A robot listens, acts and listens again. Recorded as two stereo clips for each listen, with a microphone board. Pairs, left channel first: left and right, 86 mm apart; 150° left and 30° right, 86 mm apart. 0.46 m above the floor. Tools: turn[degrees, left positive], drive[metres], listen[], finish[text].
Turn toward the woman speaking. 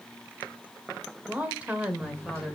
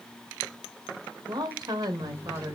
Thought: The woman speaking: 10° right.
Action: turn[-10]
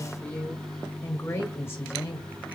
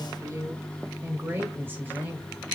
Thought: The woman speaking is now 35° left.
Action: turn[35]
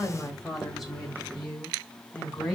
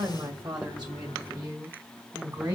Action: finish[Facing the woman speaking.]